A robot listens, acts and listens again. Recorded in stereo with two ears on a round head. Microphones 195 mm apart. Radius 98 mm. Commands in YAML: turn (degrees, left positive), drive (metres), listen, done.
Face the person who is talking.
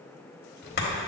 turn: 60
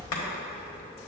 turn: 25
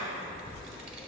done: "Facing the child speaking, under 1 m away."